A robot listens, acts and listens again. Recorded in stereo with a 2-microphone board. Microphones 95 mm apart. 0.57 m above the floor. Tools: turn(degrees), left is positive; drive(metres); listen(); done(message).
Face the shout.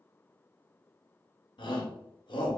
turn(degrees=55)
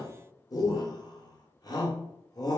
turn(degrees=55)
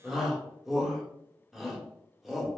done("Facing the shout.")